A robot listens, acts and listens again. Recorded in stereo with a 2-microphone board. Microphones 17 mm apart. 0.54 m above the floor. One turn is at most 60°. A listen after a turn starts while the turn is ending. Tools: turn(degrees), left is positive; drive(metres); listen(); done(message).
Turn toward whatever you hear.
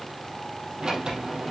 turn(degrees=-50)
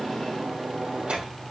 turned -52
turn(degrees=-60)
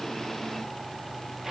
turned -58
turn(degrees=-20)
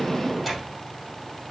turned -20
done("Facing the sliding door.")